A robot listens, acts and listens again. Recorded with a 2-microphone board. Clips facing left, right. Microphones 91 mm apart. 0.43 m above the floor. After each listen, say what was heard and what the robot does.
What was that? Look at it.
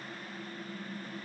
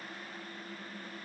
Keep listening.
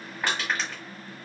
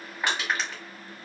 Turn 30° right.
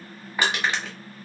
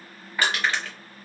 So it is at 20° left. Turn 20° left.
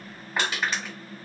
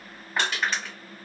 Facing the crushing, 1 to 2 m away.